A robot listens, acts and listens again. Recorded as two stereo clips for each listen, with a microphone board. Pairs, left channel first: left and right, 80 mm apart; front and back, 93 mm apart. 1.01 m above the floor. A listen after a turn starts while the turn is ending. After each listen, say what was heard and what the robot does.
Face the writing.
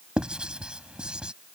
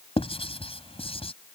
The writing: 10° right. Turn 10° right.
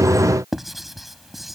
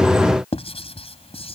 Found it: writing, straight ahead.